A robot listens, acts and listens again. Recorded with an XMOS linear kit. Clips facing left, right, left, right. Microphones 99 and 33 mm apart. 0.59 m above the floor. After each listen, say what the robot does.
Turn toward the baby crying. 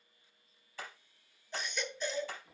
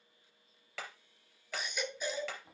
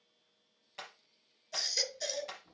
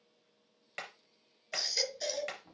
Turn 30° right.
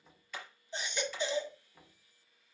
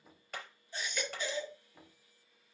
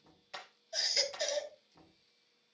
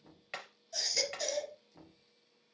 Turn 20° left.
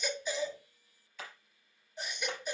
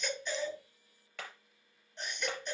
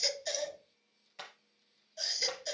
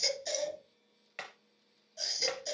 Facing the baby crying.